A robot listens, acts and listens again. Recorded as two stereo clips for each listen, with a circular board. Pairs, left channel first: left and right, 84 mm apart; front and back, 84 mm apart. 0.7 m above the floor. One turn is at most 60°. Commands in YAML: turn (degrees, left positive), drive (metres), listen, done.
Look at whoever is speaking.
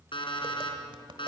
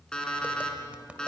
listen: true
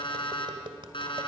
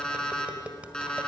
listen: true
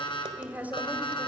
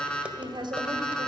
turn: -60
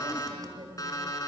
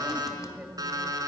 turn: -60
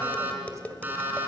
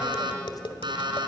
turn: -40
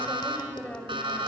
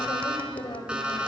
turn: 20
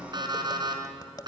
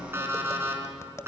listen: true
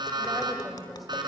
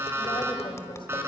listen: true
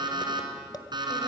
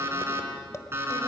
done: "I heard a woman speaking from this way, but can't make it out now."